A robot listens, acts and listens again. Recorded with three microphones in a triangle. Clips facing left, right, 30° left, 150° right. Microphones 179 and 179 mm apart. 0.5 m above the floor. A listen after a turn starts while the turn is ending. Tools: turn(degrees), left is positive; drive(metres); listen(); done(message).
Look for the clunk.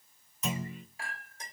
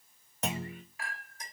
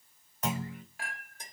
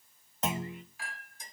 turn(degrees=-85)
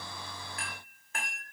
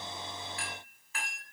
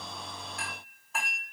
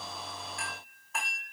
done("Facing where the clunk came from. I can't hear it now.")